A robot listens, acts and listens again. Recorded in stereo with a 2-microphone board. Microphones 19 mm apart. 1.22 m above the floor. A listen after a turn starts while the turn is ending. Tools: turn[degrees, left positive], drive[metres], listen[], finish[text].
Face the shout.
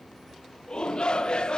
Thought: The shout: about 50° left or 130° left.
Action: turn[50]
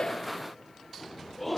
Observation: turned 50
Action: finish[Found it: a shout, straight ahead, 1 to 2 m away.]